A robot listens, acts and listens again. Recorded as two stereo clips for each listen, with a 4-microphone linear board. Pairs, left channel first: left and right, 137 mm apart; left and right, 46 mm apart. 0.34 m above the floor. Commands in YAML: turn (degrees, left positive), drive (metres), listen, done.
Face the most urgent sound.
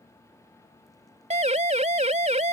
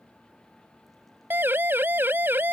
turn: -50
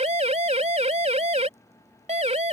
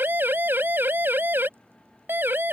turn: -65
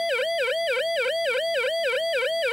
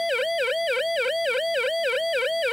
done: "Found it: a siren, straight ahead."